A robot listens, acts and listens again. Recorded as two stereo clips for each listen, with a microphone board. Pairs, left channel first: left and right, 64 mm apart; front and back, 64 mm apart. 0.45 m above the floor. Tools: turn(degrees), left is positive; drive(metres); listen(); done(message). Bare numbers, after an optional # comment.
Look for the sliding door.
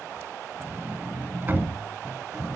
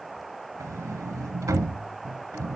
# The sliding door: 150° right.
turn(-150)
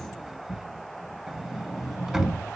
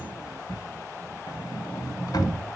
# The sliding door is now 10° right.
turn(-10)
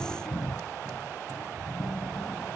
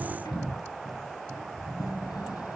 done("Facing the sliding door, under 1 m away.")